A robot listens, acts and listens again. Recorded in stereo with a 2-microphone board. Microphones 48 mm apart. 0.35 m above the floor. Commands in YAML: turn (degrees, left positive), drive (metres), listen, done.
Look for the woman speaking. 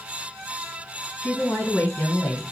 turn: 35
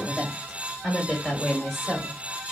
done: "Facing the woman speaking."